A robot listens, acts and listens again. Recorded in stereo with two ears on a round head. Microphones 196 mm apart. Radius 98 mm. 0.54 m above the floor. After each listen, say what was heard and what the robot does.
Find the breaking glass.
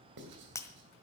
Turn 30° left.
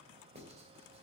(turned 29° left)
Keep listening.
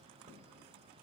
I heard breaking glass, but can't make it out now. It was about 15° right or 135° left.